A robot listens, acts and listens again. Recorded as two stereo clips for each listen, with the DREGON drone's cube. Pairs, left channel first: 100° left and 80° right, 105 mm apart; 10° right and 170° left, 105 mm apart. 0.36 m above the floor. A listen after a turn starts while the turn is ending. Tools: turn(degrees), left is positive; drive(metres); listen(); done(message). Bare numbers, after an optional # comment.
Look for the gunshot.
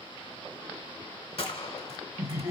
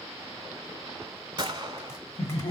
# The gunshot: 125° left.
turn(125)
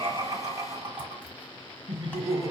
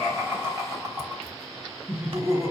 done("Facing where the gunshot came from. I can't hear it now.")